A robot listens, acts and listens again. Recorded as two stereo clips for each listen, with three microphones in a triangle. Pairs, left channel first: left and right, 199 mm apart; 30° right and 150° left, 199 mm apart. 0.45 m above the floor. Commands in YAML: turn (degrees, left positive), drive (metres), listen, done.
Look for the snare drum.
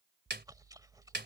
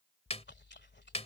turn: -80
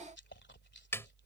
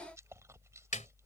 turn: 15
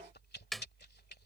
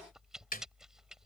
done: "Facing the snare drum."